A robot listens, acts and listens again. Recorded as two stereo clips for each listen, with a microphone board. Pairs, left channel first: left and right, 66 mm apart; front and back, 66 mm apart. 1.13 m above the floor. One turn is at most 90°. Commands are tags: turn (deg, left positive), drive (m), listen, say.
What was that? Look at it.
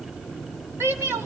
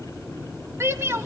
<turn deg="-90"/>
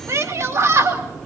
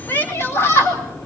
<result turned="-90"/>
<turn deg="-50"/>
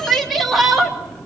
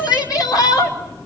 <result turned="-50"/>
<say>Facing the shout, 2 to 4 m away.</say>